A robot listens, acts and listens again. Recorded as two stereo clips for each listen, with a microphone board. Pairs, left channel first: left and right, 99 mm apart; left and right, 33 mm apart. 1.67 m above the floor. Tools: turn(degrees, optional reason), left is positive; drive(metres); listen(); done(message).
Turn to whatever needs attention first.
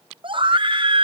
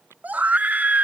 turn(degrees=-55, reason="The scream: about 55° right or 125° right.")
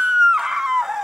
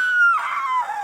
done("Found it: a scream, straight ahead.")